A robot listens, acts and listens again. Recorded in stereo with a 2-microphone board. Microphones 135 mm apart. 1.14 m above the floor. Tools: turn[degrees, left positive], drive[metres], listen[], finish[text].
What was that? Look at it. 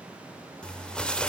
Action: turn[30]
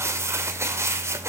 Thought: So it is at 20° right.
Action: turn[-20]
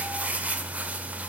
Thought: The crumpling is now 10° right.
Action: turn[-10]
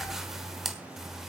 Action: finish[Found it: crumpling, straight ahead, 1 to 2 m away.]